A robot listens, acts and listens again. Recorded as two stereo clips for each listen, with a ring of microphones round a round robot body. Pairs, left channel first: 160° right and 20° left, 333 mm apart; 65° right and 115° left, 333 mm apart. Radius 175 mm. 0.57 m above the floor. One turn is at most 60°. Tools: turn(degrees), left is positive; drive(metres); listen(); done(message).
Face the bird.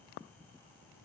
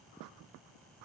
listen()
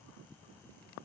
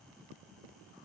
listen()
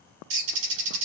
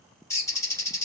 turn(degrees=15)
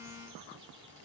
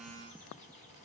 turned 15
listen()
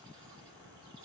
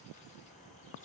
listen()
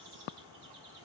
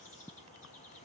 done("I heard a bird from this way, but can't make it out now.")